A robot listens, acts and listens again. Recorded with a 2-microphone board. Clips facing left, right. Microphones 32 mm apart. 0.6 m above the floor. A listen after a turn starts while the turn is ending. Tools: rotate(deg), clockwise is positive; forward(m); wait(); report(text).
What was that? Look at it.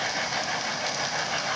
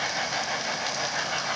wait()
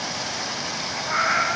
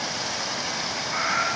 rotate(-70)
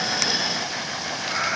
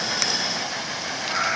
report("Found it: a cat meowing, straight ahead.")